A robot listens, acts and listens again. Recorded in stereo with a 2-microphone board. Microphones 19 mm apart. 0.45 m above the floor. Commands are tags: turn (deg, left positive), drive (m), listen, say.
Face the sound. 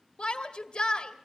<turn deg="60"/>
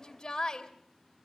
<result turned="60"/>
<turn deg="40"/>
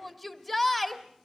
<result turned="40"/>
<say>Found it: a shout, straight ahead.</say>